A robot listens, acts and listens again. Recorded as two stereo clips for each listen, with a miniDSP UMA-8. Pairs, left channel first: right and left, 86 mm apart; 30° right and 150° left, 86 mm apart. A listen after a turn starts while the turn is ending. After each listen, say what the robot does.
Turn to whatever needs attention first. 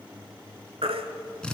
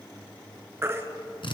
Turn 90° left.
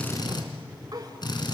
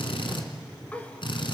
Keep listening.
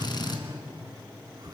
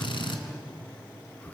Keep listening.
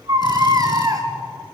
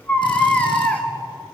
Turn 45° left.
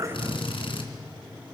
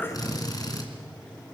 Keep listening.
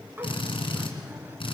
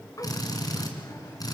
Keep listening.
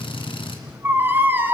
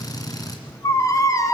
Turn 25° left.
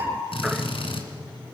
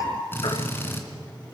Keep listening.
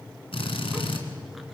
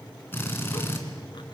Keep listening.
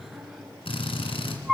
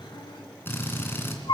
Facing the baby crying.